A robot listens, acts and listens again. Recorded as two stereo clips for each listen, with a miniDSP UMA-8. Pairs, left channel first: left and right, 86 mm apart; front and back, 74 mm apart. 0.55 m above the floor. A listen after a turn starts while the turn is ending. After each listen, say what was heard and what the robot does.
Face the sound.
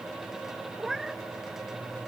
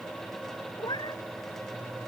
Facing the cat meowing.